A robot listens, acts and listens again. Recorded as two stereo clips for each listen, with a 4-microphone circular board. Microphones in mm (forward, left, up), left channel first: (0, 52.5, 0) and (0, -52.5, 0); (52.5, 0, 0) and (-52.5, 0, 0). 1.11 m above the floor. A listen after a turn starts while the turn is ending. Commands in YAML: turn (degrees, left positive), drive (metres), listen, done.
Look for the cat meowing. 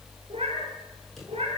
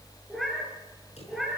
turn: -90
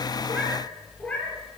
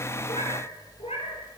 turn: 10
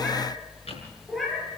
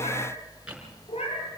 done: "Found it: a cat meowing, straight ahead."